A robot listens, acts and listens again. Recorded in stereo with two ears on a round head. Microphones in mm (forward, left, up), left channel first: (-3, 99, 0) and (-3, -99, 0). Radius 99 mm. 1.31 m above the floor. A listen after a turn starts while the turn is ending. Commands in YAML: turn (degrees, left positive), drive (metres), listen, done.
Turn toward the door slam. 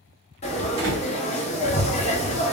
turn: -70
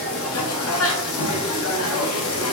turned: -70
listen: true
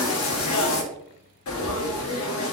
done: "I heard a door slam, but can't make it out now. It was about straight ahead or 40° right."